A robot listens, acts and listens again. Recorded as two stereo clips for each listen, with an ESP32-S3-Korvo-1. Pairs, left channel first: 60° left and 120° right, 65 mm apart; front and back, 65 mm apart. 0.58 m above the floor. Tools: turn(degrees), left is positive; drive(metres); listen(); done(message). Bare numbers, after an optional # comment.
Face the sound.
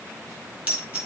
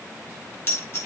# The dropped coin: 50° right.
turn(-50)
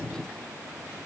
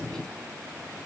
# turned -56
done("Facing where the dropped coin came from. I can't hear it now.")